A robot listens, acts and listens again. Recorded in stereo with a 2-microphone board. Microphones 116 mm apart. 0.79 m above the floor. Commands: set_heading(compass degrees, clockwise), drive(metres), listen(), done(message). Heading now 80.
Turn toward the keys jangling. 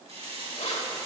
set_heading(350)
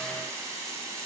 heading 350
listen()
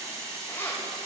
set_heading(325)
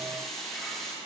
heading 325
listen()
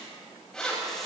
set_heading(315)
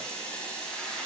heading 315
listen()
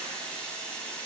listen()
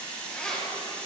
done("Found it: keys jangling, straight ahead.")